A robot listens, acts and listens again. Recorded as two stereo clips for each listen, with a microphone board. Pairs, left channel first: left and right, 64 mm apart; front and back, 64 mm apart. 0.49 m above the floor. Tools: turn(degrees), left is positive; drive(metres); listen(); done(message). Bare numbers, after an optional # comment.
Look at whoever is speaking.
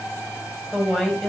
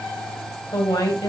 done("Facing the woman speaking.")